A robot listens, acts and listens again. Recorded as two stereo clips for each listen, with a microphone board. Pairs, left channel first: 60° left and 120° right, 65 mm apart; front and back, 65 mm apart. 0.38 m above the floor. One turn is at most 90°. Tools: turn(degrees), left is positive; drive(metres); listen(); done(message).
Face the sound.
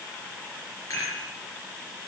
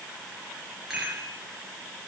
turn(degrees=90)
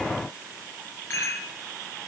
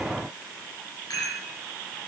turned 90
turn(degrees=10)
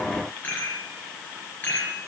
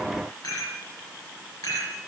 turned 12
done("Facing the rattle, over 4 m away.")